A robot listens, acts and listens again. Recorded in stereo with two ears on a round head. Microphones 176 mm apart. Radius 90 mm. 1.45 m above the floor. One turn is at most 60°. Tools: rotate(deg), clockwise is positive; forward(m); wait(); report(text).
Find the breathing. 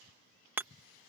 wait()
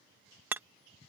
wait()
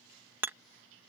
report("I can't make out breathing to turn to.")